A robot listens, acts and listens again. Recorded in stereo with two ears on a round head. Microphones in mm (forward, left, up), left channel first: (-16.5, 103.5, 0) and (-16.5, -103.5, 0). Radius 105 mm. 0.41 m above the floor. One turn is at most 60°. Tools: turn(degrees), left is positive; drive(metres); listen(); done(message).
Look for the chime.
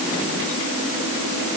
listen()
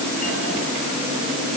listen()
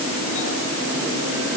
done("I can't make out a chime.")